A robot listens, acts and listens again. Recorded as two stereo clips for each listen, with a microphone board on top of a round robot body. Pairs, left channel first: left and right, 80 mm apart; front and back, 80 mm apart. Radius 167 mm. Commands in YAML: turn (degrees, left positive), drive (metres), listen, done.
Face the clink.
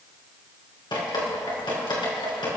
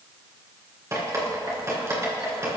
listen: true
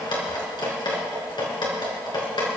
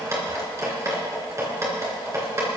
listen: true
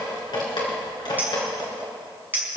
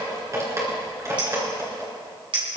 turn: -160
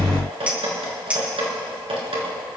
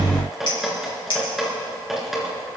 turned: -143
turn: -15
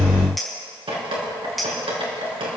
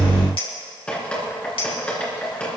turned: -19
done: "Facing the clink."